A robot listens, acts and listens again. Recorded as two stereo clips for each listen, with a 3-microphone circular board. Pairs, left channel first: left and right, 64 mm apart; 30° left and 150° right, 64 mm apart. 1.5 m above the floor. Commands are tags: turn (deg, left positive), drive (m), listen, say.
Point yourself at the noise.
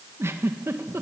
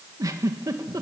<turn deg="-135"/>
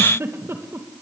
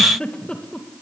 <turn deg="-45"/>
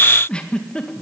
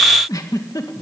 <turn deg="15"/>
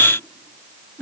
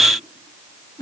<say>Facing the giggle.</say>